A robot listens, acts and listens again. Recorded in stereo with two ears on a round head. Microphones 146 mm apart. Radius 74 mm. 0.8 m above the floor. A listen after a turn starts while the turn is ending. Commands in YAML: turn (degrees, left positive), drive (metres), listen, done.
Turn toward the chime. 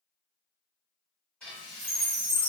turn: -55
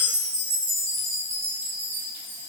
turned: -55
turn: -55
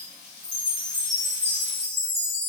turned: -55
turn: -20
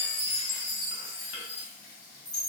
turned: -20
done: "Facing the chime, 1 to 2 m away."